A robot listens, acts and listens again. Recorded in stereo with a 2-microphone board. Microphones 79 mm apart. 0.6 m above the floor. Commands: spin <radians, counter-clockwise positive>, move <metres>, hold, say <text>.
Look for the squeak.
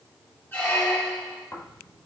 spin 0.44
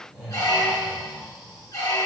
spin 2.27
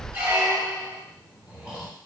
spin -0.52
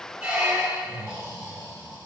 spin -0.35
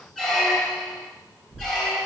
say Found it: a squeak, straight ahead.